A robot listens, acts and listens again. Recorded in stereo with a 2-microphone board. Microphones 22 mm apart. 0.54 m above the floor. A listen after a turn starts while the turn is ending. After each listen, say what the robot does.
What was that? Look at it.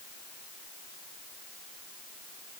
Keep listening.
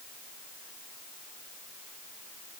Keep listening.
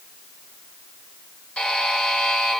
Turn 65° left.
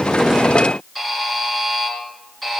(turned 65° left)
Found it: a buzzer, straight ahead.